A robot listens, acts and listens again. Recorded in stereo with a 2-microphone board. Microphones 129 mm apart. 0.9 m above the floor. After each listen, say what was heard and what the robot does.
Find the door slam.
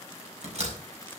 The door slam: about 55° right or 125° right. Turn 55° right.
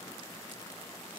Keep listening.
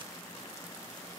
I heard a door slam, but can't make it out now. It was about straight ahead or 70° right.